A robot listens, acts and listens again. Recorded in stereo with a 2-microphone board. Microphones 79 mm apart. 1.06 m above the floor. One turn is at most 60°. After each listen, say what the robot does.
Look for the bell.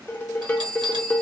Turn 60° right.
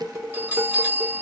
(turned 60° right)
Turn 25° right.
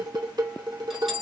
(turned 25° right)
Facing the bell.